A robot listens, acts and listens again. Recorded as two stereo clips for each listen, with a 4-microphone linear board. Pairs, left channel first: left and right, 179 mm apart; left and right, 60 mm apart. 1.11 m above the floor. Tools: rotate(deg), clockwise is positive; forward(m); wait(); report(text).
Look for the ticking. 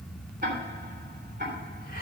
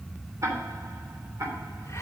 rotate(60)
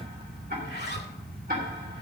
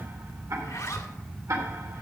rotate(60)
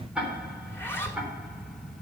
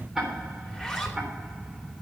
report("Facing the ticking, 2 to 4 m away.")